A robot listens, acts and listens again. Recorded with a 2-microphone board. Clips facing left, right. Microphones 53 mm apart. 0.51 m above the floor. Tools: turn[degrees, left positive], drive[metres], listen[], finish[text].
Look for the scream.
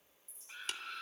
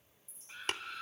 Action: turn[30]
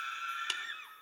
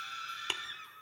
Thought: So it is at 155° left.
Action: turn[155]
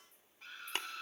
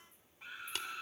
Thought: The scream is now 15° right.
Action: turn[-15]
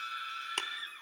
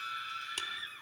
Action: finish[Found it: a scream, straight ahead, 2 to 4 m away.]